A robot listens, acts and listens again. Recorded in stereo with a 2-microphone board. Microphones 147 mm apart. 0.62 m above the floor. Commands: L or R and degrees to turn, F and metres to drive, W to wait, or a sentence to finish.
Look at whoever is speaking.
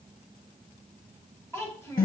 L20
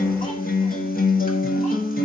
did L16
W
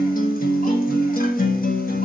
W
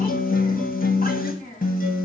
L110
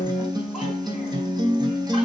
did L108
W
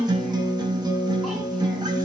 W
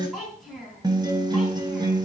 Facing the child speaking, 2 to 4 m away.